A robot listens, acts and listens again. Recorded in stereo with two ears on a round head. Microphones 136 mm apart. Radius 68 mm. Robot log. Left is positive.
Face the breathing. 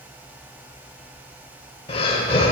note: The breathing: about 40° left or 140° left.
cmd yaw +40
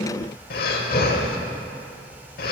note: So it is at 95° left.
cmd yaw +95
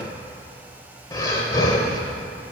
note: The breathing is now 25° left.
cmd yaw +25
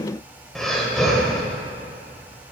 end: Facing the breathing, 1 to 2 m away.